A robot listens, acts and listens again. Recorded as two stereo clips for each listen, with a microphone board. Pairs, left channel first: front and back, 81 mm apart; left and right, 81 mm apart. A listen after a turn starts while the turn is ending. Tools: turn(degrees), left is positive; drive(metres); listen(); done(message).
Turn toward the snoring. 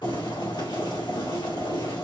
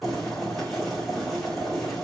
listen()
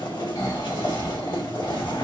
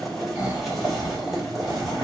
turn(degrees=-30)
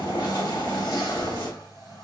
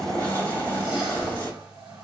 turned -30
listen()
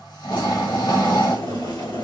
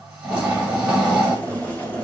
turn(degrees=-10)
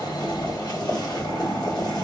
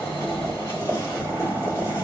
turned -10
done("Facing the snoring, 1 to 2 m away.")